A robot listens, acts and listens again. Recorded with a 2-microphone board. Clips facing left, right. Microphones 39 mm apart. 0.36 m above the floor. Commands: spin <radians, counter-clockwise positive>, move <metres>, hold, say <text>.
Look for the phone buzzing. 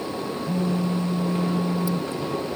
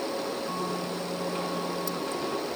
spin 0.61
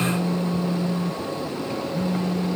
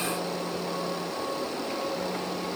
spin 1.92
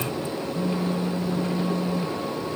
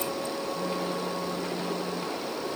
spin 0.17
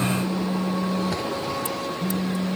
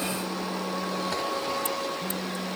say Facing the phone buzzing.